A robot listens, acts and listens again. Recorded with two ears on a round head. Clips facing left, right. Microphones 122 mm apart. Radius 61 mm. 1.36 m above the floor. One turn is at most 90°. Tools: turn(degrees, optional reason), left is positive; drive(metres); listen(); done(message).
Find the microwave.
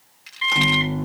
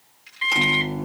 turn(degrees=-30)
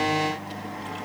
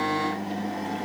turn(degrees=-90, reason="So it is at 140° right.")
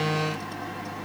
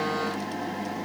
turn(degrees=-45, reason="The microwave is now 45° right.")
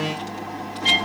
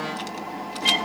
done("Facing the microwave, 1 to 2 m away.")